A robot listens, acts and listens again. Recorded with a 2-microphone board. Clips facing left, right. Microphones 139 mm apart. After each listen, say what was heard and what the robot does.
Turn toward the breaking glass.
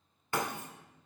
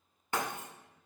The breaking glass: about 20° right or 160° right. Turn 20° right.
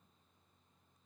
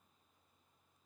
Keep listening.
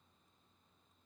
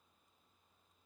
I heard breaking glass, but can't make it out now. It was about straight ahead or 140° right.